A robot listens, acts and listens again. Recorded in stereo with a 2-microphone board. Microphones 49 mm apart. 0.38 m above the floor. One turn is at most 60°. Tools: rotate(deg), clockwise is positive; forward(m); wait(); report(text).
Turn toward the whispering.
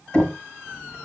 rotate(-40)
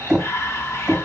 rotate(-60)
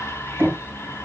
rotate(-60)
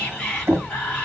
rotate(-20)
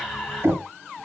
report("Facing the whispering.")